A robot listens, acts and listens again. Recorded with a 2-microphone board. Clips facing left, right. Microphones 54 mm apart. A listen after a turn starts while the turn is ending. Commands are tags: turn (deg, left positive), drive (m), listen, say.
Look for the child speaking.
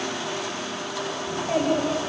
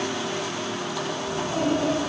<turn deg="90"/>
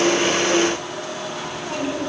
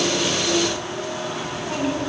<turn deg="-10"/>
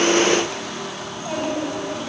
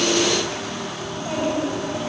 <say>Found it: a child speaking, straight ahead, over 4 m away.</say>